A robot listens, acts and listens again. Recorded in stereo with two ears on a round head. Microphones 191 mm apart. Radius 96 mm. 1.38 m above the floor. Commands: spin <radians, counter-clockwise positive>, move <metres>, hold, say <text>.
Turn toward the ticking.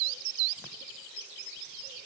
hold
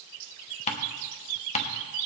spin 0.52
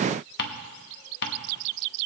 spin 1.92
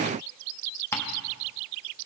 spin 0.26
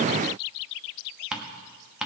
say Facing the ticking.